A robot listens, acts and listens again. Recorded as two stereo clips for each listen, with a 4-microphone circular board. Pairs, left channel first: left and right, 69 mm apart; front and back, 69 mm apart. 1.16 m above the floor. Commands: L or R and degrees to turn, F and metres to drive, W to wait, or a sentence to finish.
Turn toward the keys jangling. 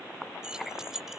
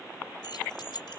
Facing the keys jangling.